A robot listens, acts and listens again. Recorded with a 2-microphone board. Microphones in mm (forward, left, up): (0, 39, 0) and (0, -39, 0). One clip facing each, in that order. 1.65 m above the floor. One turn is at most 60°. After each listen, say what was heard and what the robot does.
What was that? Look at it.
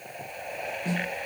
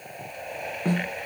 The snare drum: about 50° right or 130° right. Turn 50° right.
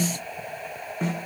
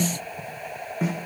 Found it: a snare drum, straight ahead, 1 to 2 m away.